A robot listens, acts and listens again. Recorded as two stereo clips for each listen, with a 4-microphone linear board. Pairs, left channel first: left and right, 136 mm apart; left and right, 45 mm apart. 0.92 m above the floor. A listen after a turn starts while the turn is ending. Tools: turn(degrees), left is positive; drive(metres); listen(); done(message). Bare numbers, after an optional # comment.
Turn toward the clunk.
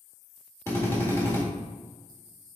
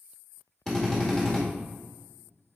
listen()
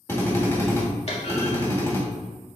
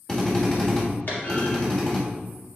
# The clunk: about 55° left or 125° left.
turn(55)
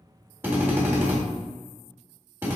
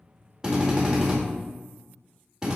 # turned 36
listen()
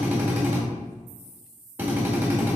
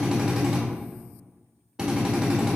done("I heard a clunk, but can't make it out now. It was about 20° left or 90° left.")